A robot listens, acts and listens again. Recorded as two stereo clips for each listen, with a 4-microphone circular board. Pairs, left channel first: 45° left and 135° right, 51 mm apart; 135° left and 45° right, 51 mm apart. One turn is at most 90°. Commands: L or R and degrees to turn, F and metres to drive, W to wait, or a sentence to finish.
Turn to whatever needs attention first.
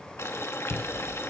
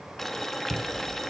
R10
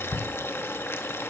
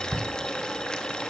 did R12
Found it: a shout, straight ahead, under 1 m away.